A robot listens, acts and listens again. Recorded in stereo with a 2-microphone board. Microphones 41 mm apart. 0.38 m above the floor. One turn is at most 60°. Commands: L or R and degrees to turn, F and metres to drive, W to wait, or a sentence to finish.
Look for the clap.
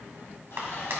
R60
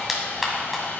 Found it: a clap, straight ahead.